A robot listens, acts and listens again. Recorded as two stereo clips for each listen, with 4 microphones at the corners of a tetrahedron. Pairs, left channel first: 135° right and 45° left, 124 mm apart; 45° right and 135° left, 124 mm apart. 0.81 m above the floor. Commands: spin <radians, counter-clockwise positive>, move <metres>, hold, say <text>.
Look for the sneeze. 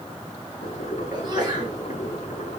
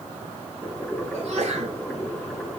spin 1.75
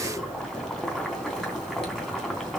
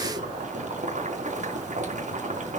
say I heard a sneeze from this way, but can't make it out now.